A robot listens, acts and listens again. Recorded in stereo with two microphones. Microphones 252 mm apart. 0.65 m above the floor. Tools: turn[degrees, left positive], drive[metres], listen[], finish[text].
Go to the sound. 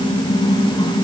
Action: listen[]
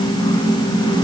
Action: listen[]
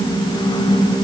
Action: finish[I can't make out anything.]